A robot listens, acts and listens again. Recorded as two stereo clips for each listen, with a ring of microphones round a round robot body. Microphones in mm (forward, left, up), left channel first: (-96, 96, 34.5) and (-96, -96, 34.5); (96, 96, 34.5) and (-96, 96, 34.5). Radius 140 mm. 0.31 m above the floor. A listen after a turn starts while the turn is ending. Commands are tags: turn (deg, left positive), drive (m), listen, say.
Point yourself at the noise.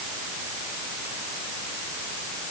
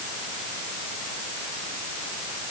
<listen/>
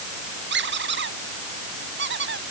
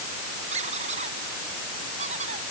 <turn deg="-115"/>
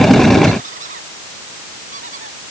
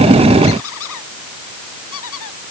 <turn deg="-25"/>
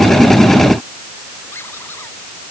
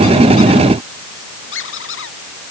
<turn deg="10"/>
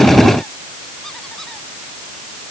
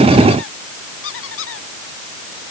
<say>Found it: a squeak, straight ahead.</say>